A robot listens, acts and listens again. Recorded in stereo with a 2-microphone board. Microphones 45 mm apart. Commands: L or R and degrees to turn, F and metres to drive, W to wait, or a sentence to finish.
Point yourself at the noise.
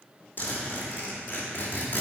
L45
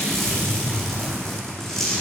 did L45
Facing the zipper, 2 to 4 m away.